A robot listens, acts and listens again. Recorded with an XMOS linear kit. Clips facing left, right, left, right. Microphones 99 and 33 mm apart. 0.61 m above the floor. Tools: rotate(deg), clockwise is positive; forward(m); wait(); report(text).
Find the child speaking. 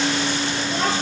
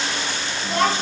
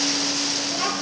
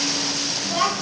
rotate(60)
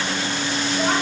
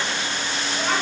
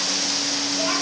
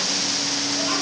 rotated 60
wait()
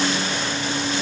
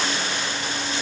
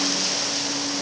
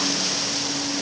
wait()
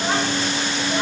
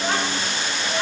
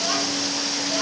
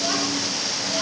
report("I heard a child speaking, but can't make it out now. It was about straight ahead or 60° right.")